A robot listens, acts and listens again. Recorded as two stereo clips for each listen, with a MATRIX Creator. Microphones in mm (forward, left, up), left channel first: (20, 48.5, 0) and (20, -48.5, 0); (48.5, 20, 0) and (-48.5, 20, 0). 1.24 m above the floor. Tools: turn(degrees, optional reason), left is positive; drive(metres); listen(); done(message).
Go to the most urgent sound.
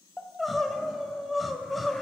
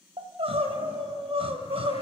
turn(degrees=180, reason="The crying: straight behind.")
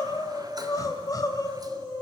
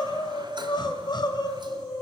turn(degrees=40, reason="The crying is now 40° left.")
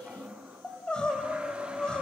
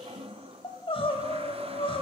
turn(degrees=10, reason="The crying is now 10° left.")
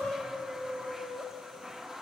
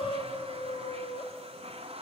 drive(metres=1.0)
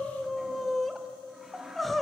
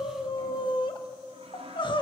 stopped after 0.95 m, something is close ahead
done("Arrived at the crying, straight ahead.")